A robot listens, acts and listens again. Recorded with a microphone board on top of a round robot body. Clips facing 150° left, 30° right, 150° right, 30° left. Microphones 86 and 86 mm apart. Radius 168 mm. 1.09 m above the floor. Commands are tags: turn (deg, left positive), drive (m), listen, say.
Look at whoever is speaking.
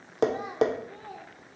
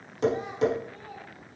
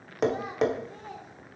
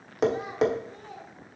<turn deg="160"/>
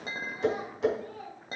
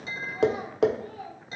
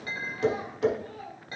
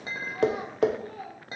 <turn deg="30"/>
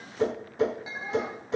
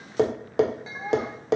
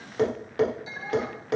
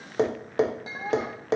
<say>Found it: a child speaking, straight ahead, 2 to 4 m away.</say>